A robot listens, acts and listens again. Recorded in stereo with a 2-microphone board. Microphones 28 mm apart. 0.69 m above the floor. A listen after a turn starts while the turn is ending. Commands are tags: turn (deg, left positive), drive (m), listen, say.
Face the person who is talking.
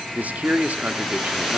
<turn deg="-60"/>
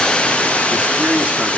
<listen/>
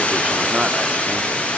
<listen/>
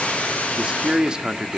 <turn deg="-40"/>
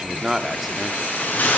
<listen/>
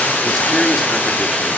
<listen/>
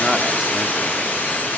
<say>I heard a man speaking from this way, but can't make it out now.</say>